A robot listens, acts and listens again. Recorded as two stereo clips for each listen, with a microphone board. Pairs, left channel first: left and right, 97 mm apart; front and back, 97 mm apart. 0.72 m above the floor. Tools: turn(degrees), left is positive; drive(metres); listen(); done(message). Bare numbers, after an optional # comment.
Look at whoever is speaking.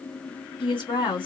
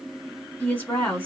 # The woman speaking: 60° left.
turn(60)
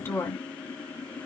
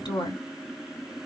# The woman speaking is now 25° left.
turn(25)
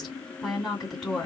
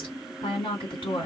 done("Facing the woman speaking.")